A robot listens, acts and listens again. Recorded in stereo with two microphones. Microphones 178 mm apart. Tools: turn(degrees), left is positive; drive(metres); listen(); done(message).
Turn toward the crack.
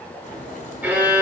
turn(degrees=45)
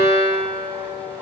listen()
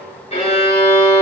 done("I heard a crack, but can't make it out now. It was about straight ahead or 90° left.")